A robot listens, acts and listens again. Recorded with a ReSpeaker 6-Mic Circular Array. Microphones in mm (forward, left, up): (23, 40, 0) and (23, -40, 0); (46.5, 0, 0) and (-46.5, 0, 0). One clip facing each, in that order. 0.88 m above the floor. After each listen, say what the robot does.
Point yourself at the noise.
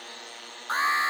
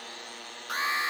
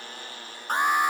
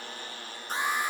Turn 30° left.
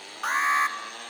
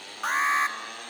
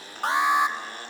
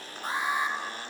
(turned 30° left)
Facing the alarm, 1 to 2 m away.